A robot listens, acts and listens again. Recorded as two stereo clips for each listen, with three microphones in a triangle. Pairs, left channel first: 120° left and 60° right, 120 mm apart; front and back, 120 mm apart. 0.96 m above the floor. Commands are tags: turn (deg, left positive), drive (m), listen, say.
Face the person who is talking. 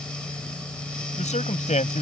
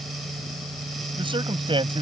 <turn deg="135"/>
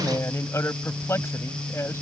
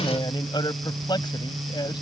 <turn deg="50"/>
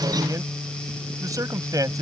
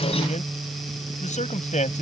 <say>Facing the man speaking.</say>